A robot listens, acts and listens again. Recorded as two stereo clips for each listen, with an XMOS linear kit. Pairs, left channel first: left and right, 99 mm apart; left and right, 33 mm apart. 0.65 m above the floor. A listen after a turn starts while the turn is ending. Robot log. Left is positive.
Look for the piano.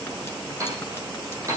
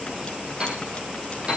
note: The piano: about 35° right or 145° right.
cmd yaw -35
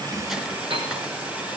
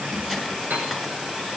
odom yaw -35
note: So it is at 110° right.
cmd yaw -110
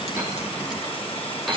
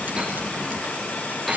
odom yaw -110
end: Facing the piano, over 4 m away.